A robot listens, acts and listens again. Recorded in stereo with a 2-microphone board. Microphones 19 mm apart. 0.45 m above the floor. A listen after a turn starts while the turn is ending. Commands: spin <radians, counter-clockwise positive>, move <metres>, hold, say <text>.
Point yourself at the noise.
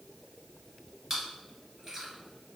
spin -0.52
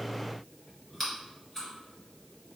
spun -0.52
spin 0.26
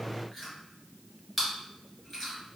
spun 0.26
say Facing the chewing, 1 to 2 m away.